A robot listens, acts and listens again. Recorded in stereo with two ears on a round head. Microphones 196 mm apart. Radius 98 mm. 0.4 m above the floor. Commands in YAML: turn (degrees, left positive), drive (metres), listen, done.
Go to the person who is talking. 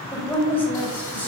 turn: 30
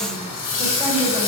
listen: true
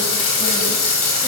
listen: true
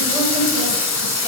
done: "I heard a woman speaking, but can't make it out now. It was about 20° right or 140° left. I did not reach it."